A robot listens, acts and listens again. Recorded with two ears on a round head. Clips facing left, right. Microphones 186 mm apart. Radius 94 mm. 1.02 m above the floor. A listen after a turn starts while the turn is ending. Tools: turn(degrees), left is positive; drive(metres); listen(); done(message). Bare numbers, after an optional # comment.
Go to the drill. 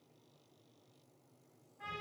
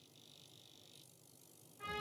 listen()
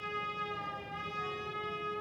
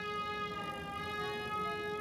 listen()
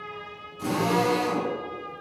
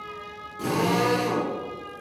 # The drill: about 70° right or 110° right.
turn(-70)
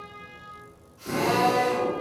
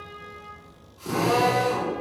# So it is at 30° right.
turn(-30)
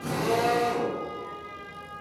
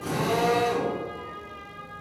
# The drill is now 10° left.
turn(10)
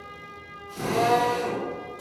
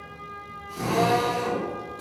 drive(1.0)
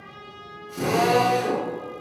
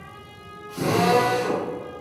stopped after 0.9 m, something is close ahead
done("I am next to the drill.")